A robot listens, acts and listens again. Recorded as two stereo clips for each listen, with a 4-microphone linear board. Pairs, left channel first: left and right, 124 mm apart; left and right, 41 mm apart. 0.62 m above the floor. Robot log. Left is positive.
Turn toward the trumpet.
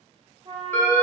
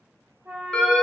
note: The trumpet: about 50° right or 130° right.
cmd yaw -50
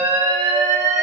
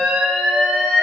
cmd idle
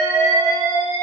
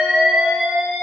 cmd idle
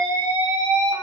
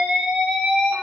end: I heard a trumpet, but can't make it out now. It was about straight ahead or 80° right.